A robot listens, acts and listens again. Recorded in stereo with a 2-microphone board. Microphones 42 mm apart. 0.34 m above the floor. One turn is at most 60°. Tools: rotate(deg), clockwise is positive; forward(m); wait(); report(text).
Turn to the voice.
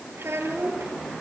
rotate(60)
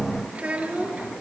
rotate(35)
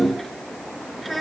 report("Facing the child speaking, 2 to 4 m away.")